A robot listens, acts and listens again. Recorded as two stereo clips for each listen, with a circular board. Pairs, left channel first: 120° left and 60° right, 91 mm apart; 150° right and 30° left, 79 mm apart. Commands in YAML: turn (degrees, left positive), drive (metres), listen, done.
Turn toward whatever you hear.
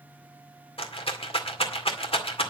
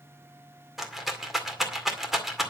turn: 115
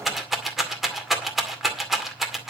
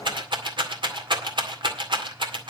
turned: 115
turn: 30
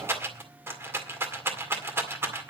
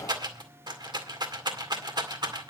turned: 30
done: "Facing the rattle, 2 to 4 m away."